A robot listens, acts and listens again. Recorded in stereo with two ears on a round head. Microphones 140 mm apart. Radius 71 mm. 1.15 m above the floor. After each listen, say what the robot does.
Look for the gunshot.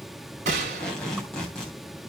Turn 50° right.
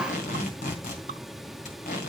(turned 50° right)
Keep listening.
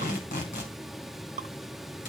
I heard a gunshot, but can't make it out now. It was about straight ahead or 80° right.